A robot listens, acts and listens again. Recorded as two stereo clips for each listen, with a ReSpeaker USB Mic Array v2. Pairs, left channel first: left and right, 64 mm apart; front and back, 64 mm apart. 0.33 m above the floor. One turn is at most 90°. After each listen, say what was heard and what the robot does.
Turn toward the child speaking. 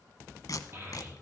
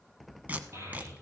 The child speaking: 135° right. Turn 90° right.
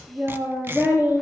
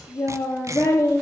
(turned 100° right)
The child speaking is now 30° right. Turn 30° right.
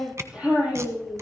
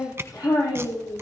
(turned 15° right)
The child speaking is now 15° right. Turn 15° right.
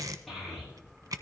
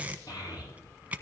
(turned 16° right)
Found it: a child speaking, straight ahead.